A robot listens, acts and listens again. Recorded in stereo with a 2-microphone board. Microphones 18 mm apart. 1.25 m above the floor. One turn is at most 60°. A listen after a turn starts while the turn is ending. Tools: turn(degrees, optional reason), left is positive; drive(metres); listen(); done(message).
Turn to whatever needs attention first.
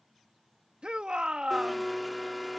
turn(degrees=-60)
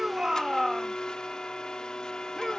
turn(degrees=-15, reason="So it is at 15° right.")
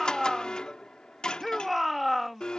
done("Found it: a shout, straight ahead.")